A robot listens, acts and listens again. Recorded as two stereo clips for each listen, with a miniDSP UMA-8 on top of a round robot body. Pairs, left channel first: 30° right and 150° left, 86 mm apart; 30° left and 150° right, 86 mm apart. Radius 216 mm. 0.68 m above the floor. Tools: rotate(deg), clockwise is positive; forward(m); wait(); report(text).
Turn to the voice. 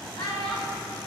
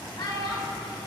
rotate(10)
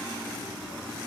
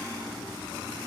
wait()
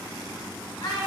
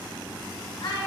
report("Facing the child speaking.")